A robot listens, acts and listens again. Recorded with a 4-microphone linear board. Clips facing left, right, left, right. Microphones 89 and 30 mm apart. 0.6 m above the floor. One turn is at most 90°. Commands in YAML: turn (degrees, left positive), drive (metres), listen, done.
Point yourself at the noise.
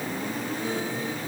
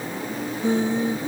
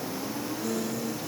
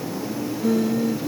turn: -25
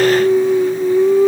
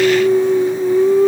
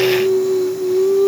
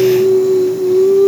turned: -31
done: "Found it: singing, straight ahead."